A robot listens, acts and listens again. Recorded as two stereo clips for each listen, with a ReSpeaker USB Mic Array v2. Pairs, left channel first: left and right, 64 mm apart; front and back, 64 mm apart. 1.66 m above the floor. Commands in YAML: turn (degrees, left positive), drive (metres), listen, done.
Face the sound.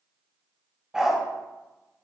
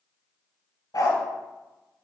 turn: -10
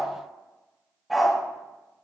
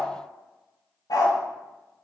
done: "Found it: a dog barking, straight ahead, 2 to 4 m away."